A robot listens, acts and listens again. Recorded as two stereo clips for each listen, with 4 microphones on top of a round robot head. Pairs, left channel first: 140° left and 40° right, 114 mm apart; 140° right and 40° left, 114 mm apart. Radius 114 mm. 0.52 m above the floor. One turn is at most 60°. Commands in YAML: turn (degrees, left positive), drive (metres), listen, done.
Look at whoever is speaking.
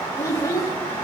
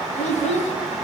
turn: -60
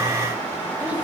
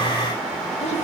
turn: -60
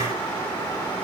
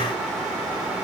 turn: -40
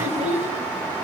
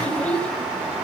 turn: -60
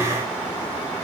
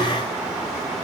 listen: true
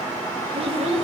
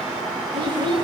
done: "Found it: a child speaking, straight ahead, 1 to 2 m away."